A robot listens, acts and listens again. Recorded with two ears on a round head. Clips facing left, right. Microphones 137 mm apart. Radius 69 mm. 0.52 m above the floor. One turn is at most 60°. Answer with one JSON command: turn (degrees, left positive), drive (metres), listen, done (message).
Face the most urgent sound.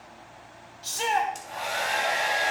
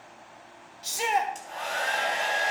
{"turn": -30}
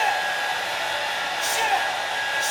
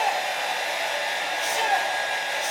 {"listen": true}
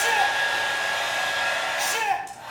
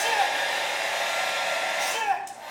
{"turn": 15}
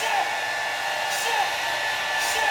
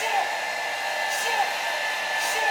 {"listen": true}
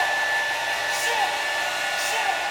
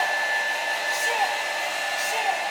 {"listen": true}
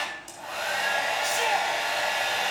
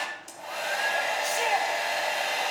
{"done": "I heard a shout from this way, but can't make it out now."}